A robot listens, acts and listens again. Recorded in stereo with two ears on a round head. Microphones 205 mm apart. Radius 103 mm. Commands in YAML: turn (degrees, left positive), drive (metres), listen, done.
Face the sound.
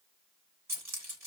turn: -30
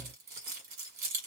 turn: -140
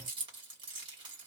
turn: -20
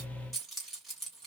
done: "Found it: keys jangling, straight ahead."